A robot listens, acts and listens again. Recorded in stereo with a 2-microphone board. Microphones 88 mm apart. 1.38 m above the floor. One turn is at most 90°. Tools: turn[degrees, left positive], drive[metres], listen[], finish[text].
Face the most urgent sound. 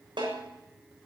Action: listen[]
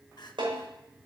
Thought: The crying: about 50° left or 130° left.
Action: turn[50]
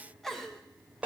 Action: finish[Found it: crying, straight ahead, 1 to 2 m away.]